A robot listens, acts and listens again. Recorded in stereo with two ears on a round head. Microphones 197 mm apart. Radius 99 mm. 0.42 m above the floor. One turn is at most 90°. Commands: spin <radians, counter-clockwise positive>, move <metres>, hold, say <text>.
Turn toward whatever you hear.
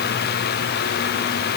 hold
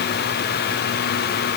hold
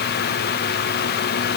say I can't make out anything to turn to.